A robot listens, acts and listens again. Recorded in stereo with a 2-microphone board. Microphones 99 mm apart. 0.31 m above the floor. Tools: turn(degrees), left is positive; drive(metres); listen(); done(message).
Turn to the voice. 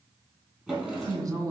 turn(degrees=-35)
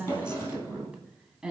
turn(degrees=-10)
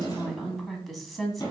done("Found it: a woman speaking, straight ahead.")